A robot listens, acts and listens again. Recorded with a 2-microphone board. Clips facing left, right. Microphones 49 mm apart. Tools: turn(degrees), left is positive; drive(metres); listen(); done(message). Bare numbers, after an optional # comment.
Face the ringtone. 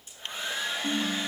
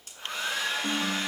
# The ringtone: about 25° right or 155° right.
turn(-25)
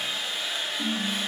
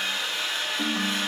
# So it is at 130° right.
turn(-130)
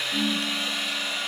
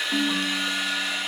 # The ringtone is now 50° right.
turn(-50)
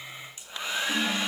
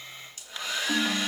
# The ringtone is now 20° right.
turn(-20)
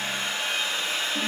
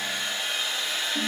done("Facing the ringtone, 1 to 2 m away.")